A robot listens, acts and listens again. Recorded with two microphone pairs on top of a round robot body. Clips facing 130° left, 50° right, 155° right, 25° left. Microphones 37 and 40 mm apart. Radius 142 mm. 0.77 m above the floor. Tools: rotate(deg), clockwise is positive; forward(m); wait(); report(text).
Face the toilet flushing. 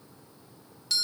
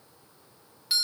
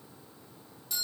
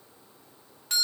wait()
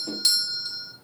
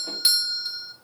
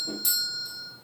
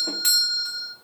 wait()
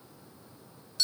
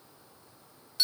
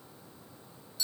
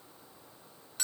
report("I can't make out a toilet flushing, only a doorbell.")